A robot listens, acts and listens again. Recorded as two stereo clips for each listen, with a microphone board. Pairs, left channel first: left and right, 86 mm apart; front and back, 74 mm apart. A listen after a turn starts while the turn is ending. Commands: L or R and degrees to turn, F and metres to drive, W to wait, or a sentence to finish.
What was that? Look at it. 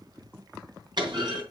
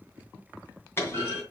R60
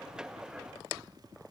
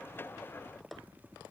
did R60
I heard a clunk from this way, but can't make it out now.